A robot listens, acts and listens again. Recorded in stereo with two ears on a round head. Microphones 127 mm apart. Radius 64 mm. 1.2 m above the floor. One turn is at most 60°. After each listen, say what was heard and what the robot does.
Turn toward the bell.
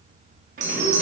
The bell: about 50° right or 130° right. Turn 50° right.
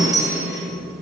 Found it: a bell, straight ahead.